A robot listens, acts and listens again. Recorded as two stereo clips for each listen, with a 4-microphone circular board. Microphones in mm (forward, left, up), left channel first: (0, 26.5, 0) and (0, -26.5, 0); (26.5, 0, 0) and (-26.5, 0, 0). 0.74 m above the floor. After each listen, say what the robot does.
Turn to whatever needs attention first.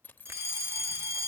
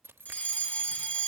Turn 55° right.
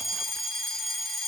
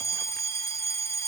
Facing the fire alarm.